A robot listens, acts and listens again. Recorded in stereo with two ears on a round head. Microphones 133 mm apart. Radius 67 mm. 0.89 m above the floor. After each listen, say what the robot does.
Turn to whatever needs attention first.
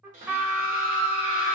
Turn 60° right.
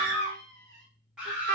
Facing the scream.